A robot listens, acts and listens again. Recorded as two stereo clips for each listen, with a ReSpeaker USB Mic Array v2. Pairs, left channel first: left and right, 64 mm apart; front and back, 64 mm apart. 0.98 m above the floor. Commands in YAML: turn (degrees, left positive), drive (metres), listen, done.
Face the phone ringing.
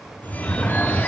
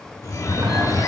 turn: 25
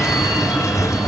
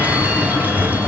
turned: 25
turn: -15
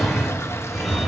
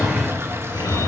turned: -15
done: "Facing the phone ringing."